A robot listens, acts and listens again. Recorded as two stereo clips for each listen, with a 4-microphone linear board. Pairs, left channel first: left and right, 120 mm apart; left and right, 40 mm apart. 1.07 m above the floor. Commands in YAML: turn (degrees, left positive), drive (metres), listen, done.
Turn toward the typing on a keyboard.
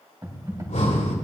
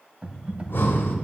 turn: -30
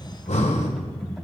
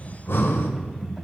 done: "Found it: typing on a keyboard, straight ahead."